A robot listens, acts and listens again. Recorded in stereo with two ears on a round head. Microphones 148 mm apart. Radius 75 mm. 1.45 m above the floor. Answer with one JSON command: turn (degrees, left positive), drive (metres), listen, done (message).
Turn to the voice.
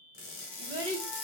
{"turn": -35}
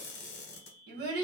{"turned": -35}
{"turn": -110}
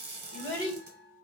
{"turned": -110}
{"turn": 20}
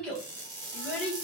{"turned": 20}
{"done": "Found it: a child speaking, straight ahead."}